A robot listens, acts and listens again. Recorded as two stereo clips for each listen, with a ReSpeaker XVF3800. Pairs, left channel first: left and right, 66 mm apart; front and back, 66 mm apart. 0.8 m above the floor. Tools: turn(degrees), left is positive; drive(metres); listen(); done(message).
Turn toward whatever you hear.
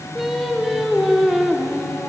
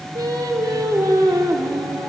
turn(degrees=-175)
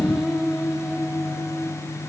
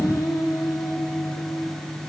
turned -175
turn(degrees=-10)
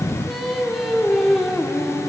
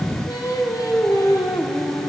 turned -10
done("Facing the singing.")